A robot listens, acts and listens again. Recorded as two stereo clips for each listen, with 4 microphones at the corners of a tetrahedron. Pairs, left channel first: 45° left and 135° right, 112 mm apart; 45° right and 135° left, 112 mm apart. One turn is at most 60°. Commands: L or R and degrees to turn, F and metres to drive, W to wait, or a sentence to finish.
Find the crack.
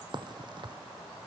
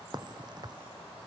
L60
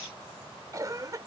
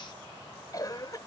L60
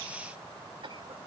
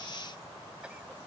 L60
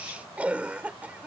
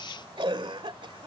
Facing where the crack came from. I can't hear it now.